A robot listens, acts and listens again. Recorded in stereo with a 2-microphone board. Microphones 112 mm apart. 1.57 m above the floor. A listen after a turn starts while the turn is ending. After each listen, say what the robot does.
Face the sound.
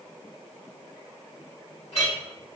Turn 70° left.
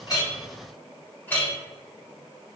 Turn 20° left.
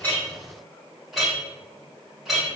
Found it: a clink, straight ahead.